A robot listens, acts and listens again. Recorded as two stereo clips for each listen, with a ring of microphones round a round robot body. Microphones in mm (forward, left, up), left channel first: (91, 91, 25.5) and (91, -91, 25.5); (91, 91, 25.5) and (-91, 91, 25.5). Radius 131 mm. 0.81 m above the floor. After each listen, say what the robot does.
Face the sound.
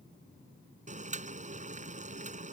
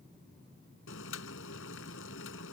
Turn 40° right.
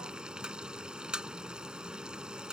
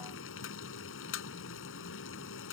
Facing the boiling.